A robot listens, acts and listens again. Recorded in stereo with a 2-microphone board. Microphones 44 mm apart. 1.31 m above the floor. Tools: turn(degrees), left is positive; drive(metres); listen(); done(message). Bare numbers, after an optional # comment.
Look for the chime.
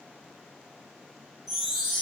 turn(30)
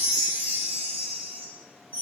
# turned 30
# So it is at 30° right.
turn(-30)
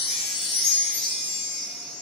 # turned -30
done("Facing the chime.")